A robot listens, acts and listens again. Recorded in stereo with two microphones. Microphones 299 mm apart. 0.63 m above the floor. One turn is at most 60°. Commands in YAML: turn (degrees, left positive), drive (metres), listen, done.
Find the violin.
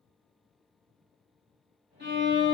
turn: -35
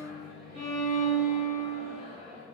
turn: -60
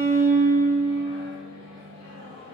turn: -50
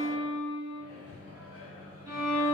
turn: -10
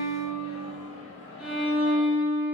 done: "Found it: a violin, straight ahead."